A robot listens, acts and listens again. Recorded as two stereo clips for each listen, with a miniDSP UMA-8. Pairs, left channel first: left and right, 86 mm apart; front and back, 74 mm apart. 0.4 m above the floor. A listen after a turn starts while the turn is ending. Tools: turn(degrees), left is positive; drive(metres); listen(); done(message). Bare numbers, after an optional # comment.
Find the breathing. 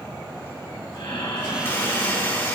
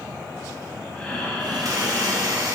# The breathing: 65° left.
turn(65)
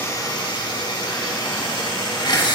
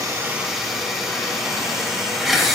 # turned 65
listen()
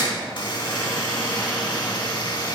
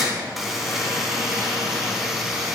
listen()
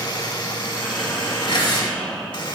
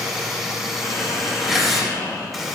done("Found it: breathing, straight ahead, 2 to 4 m away.")